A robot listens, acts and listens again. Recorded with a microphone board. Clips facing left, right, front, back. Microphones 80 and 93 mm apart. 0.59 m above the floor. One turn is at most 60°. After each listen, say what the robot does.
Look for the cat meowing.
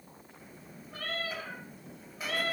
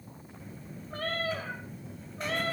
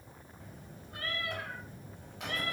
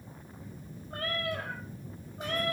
Turn 60° right.
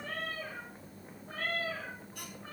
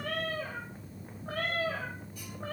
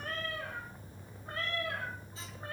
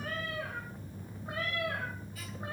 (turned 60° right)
Turn 60° right.
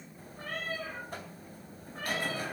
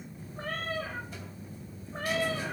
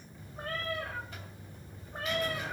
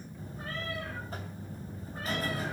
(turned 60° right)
Turn 45° right.
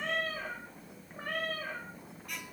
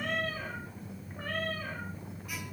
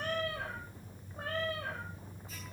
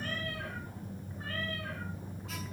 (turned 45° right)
Turn 10° left.
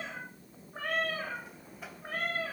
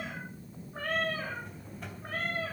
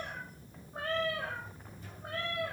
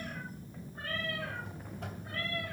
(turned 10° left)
Found it: a cat meowing, straight ahead.